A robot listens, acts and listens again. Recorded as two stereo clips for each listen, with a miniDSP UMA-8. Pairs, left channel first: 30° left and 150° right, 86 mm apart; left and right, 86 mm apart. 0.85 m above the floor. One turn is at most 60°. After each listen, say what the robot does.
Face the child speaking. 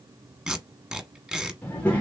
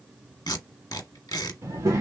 Turn 40° right.
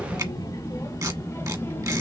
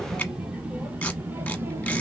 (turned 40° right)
Turn 30° right.
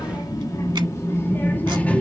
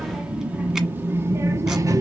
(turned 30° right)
Turn 45° right.
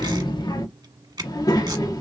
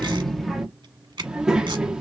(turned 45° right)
Turn 10° right.
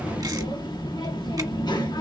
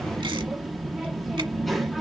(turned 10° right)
Found it: a child speaking, straight ahead, 1 to 2 m away.